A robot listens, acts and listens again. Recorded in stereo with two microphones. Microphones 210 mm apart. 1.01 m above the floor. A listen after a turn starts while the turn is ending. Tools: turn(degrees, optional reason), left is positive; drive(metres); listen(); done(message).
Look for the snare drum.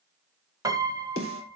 turn(degrees=90)
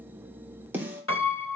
turn(degrees=-10, reason="So it is at 10° right.")
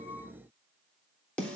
done("Facing the snare drum.")